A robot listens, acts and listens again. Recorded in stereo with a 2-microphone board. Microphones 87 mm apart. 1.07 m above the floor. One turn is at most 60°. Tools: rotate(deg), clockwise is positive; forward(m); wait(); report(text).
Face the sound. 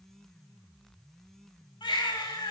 rotate(-60)
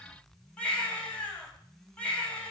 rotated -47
rotate(-15)
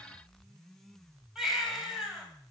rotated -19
report("Found it: a baby crying, straight ahead, 2 to 4 m away.")